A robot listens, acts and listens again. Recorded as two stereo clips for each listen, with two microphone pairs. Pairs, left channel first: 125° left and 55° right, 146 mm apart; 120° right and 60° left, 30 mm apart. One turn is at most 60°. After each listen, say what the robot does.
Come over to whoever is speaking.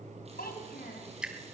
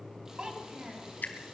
Turn 60° left.
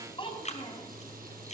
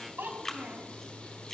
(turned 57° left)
Turn 60° left.
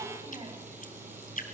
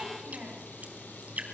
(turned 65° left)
Drive 1.0 m forward.
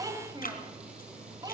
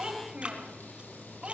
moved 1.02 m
Turn 10° left.
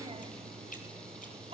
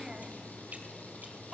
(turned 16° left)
Drive 1.0 m forward.
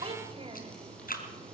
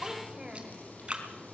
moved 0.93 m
Drive 1.0 m forward.
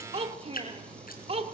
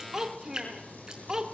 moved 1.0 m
Turn 10° right.
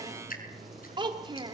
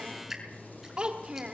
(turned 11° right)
Drive 1.0 m forward.
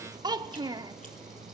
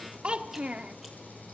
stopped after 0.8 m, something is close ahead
Arrived at the child speaking, straight ahead.